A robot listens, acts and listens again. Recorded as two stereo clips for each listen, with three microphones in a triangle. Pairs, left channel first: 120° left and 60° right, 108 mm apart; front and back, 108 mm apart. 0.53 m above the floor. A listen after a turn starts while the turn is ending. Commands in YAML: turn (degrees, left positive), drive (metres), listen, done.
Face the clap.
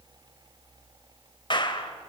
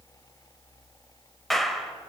turn: 85
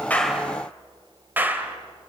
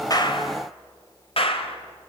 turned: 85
turn: 10
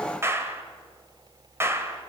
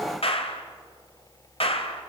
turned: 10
done: "Facing the clap."